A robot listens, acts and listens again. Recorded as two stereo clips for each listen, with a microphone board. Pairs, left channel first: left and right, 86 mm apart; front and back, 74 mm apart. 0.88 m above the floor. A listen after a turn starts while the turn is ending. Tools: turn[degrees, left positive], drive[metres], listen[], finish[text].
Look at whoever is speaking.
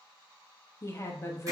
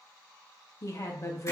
Thought: The woman speaking: 40° left.
Action: turn[40]
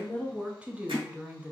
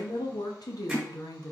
Thought: The woman speaking is now 20° right.
Action: turn[-20]
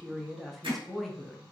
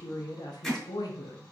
Action: finish[Facing the woman speaking.]